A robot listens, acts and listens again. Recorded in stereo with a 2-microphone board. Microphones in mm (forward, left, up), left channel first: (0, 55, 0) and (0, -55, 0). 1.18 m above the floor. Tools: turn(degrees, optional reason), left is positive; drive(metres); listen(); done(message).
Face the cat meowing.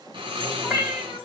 turn(degrees=-30)
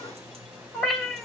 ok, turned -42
done("Facing the cat meowing, 1 to 2 m away.")